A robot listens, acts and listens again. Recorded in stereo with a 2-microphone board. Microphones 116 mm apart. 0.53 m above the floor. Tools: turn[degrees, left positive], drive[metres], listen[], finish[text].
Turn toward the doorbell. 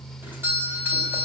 Thought: The doorbell: about 20° right or 160° right.
Action: turn[-20]
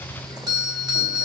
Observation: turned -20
Thought: So it is at 140° right.
Action: turn[-140]
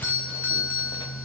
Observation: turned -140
Thought: The doorbell is now 15° left.
Action: turn[15]
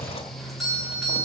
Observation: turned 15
Action: finish[Facing the doorbell.]